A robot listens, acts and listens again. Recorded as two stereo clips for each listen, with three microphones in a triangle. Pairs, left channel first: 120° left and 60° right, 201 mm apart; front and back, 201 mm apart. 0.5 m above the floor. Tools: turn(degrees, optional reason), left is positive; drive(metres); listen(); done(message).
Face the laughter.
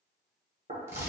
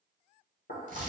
listen()
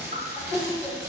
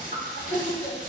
turn(degrees=25, reason="The laughter: 25° left.")
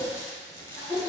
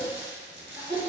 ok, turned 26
done("Facing the laughter.")